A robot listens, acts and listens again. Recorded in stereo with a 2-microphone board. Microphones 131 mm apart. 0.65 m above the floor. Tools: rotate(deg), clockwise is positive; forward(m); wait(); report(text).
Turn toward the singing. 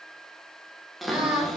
rotate(30)
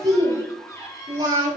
rotate(150)
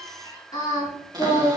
rotate(-30)
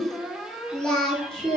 report("Found it: singing, straight ahead, over 4 m away.")